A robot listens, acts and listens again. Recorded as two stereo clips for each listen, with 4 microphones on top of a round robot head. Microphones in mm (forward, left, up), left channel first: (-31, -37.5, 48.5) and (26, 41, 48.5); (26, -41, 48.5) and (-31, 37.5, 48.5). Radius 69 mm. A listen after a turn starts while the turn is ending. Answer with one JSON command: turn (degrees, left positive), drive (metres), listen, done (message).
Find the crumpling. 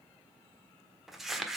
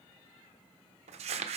{"turn": 140}
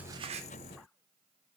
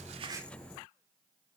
{"listen": true}
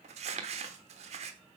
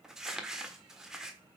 {"turn": 40}
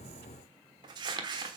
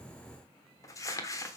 {"done": "Found it: crumpling, straight ahead."}